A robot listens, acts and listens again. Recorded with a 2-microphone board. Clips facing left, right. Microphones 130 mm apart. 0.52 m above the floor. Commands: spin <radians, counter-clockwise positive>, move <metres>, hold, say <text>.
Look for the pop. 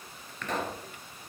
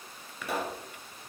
spin -0.52
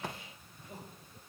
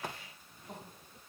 hold
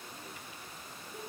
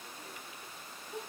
say I heard a pop, but can't make it out now. It was about 20° left or 140° right.